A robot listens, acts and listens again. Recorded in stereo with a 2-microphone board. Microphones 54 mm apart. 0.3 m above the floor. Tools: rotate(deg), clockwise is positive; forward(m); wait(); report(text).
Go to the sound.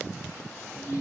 rotate(-45)
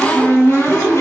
rotate(-85)
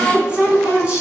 rotate(20)
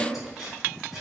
forward(1.0)
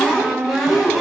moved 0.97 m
forward(1.0)
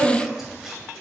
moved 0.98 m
rotate(10)
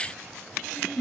forward(1.0)
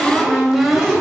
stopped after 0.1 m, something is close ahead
report("Arrived at the cupboard door, straight ahead.")